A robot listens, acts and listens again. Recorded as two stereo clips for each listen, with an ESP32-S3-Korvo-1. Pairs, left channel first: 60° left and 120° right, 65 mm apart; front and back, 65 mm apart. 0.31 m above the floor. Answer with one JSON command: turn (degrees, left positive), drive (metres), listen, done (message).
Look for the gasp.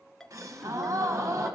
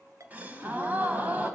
{"turn": -120}
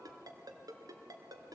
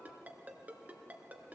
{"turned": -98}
{"turn": -20}
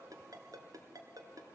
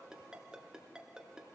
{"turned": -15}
{"done": "I heard a gasp from this way, but can't make it out now."}